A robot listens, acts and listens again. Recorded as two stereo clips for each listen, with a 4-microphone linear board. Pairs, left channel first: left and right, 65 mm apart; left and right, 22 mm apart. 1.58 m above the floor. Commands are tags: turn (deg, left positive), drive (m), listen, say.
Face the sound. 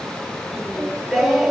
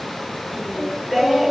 <turn deg="30"/>
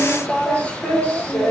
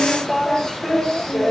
<turn deg="150"/>
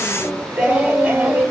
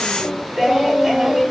<turn deg="-30"/>
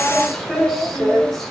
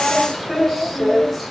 <say>Facing the singing.</say>